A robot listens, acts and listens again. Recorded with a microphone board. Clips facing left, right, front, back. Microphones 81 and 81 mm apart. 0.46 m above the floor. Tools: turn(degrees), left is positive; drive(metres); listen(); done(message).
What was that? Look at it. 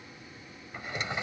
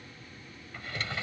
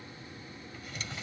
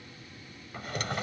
turn(degrees=160)
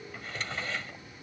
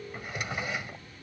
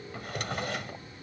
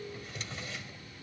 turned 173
turn(degrees=-15)
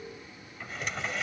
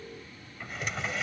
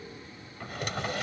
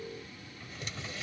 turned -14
done("Found it: a drawer, straight ahead.")